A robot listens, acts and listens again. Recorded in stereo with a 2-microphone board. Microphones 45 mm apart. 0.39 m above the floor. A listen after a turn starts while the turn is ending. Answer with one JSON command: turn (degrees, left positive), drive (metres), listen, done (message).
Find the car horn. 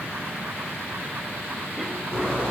{"turn": -30}
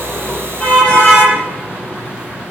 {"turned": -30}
{"turn": 20}
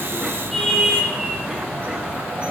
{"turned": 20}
{"done": "Found it: a car horn, straight ahead, over 4 m away."}